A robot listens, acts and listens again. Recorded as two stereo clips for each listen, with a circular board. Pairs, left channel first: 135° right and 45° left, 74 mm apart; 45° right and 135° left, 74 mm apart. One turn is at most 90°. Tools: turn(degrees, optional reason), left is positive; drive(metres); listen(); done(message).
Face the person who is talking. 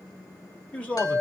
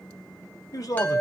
turn(degrees=-65, reason="The man speaking: 65° right.")
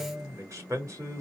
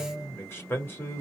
done("Found it: a man speaking, straight ahead.")